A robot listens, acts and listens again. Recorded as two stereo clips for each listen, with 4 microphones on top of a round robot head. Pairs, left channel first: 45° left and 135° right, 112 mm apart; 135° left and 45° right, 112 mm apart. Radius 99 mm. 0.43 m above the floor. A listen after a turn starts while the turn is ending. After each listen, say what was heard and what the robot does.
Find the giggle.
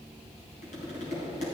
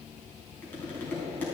Keep listening.
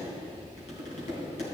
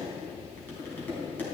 Keep listening.
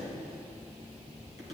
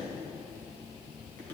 I can't make out a giggle to turn to.